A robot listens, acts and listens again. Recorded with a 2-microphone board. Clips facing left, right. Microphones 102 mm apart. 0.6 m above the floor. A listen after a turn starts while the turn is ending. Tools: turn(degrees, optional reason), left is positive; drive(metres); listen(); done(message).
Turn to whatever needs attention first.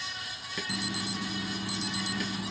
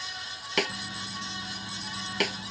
turn(degrees=90)
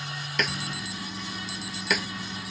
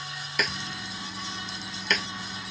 done("Facing the alarm.")